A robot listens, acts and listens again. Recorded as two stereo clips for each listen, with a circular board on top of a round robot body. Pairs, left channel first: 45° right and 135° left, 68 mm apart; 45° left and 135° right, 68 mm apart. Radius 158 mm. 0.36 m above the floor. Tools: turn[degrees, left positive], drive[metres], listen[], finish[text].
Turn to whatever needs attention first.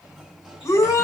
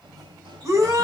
Thought: The shout: 90° right.
Action: turn[-90]
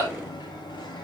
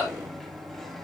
Thought: The shout is now 10° left.
Action: turn[10]
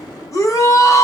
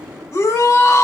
Action: finish[Found it: a shout, straight ahead.]